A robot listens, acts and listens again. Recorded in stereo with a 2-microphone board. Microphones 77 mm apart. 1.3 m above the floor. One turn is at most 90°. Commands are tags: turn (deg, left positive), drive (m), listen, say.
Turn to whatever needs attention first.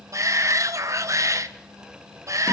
<turn deg="-45"/>
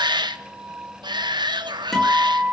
<turn deg="-90"/>
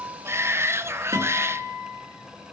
<turn deg="-35"/>
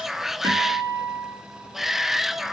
<say>Found it: a shout, straight ahead.</say>